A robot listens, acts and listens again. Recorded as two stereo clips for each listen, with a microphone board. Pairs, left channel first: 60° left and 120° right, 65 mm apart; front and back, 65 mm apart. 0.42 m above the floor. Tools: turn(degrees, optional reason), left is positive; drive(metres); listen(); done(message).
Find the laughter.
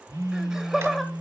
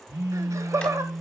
turn(degrees=150, reason="The laughter: 150° left.")
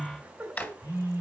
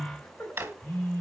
turn(degrees=-55, reason="The laughter is now 55° right.")
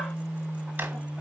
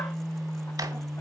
listen()
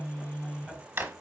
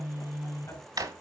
listen()
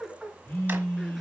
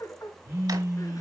turn(degrees=-30, reason="The laughter is now 30° right.")
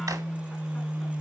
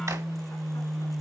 listen()
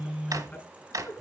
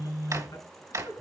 listen()
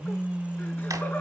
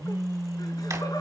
done("I heard laughter from this way, but can't make it out now.")